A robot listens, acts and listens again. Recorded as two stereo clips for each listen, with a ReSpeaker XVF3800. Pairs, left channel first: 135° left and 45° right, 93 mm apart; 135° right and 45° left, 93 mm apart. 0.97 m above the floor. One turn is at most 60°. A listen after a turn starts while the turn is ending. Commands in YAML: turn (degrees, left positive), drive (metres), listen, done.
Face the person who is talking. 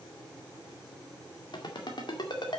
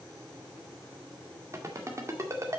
listen: true
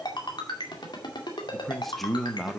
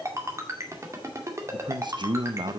turn: 50
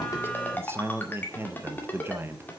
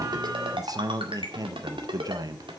turn: 10
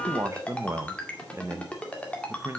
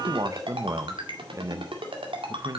done: "Facing the man speaking."